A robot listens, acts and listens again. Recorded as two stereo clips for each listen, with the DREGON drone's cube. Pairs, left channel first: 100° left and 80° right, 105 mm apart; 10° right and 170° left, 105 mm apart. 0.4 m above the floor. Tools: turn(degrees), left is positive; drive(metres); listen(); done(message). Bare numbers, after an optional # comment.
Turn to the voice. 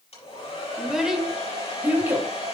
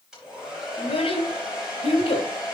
# The child speaking: 10° right.
turn(-10)
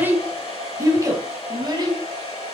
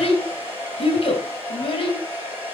# The child speaking is now 35° right.
turn(-35)
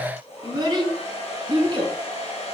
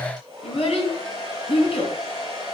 # The child speaking is now 35° right.
turn(-35)
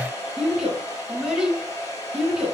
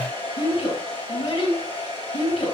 done("Found it: a child speaking, straight ahead, 2 to 4 m away.")